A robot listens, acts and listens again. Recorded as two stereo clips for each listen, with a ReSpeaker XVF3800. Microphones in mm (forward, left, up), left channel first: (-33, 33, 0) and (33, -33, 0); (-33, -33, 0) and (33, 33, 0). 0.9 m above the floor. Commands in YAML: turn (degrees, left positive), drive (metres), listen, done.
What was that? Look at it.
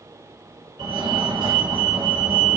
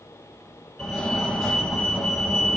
turn: -55
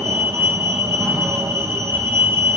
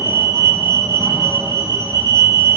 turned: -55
turn: 10
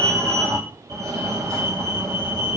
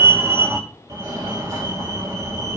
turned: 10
done: "Facing the fire alarm."